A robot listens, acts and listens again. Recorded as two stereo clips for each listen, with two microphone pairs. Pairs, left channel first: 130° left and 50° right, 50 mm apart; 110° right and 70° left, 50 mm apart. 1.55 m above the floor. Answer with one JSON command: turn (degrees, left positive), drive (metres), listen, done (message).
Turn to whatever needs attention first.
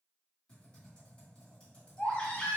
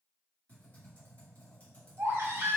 {"turn": 65}
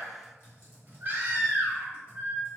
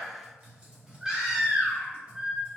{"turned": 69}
{"done": "Found it: a baby crying, straight ahead."}